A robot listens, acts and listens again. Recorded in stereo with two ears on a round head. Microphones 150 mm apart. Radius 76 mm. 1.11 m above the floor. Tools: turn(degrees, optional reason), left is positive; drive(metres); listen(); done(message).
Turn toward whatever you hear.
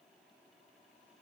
listen()
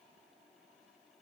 listen()
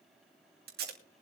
turn(degrees=-70, reason="The tape being pulled: about 70° right or 110° right.")
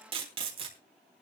turn(degrees=-35, reason="So it is at 35° right.")
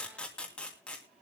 done("Facing the tape being pulled, 2 to 4 m away.")